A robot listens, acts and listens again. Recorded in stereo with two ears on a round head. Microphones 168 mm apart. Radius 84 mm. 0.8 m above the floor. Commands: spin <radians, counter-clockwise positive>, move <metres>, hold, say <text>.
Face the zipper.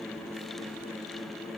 hold
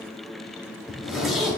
spin 0.52
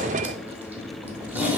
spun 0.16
spin -0.52
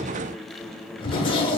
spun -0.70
spin 0.52
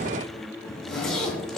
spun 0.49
say Found it: a zipper, straight ahead, under 1 m away.